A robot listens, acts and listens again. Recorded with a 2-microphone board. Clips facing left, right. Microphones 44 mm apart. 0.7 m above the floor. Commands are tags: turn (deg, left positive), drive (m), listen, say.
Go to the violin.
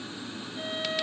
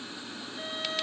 <turn deg="30"/>
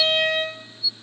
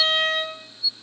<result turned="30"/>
<turn deg="140"/>
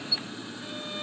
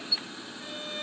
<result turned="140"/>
<listen/>
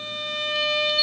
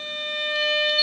<turn deg="-25"/>
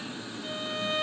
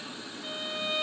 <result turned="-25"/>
<turn deg="-15"/>
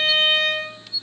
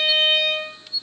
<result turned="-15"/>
<drive m="1.0"/>
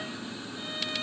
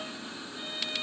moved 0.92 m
<listen/>
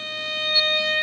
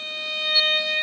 <drive m="1.0"/>
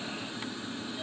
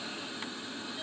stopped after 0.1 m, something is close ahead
<listen/>
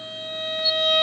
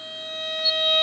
<say>Arrived at the violin, straight ahead.</say>